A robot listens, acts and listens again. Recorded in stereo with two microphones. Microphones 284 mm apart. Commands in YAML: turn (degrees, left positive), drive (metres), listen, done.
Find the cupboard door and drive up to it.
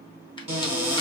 turn: -20
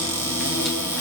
drive: 1.0
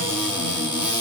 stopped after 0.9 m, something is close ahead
turn: -10
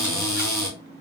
done: "I am next to the cupboard door."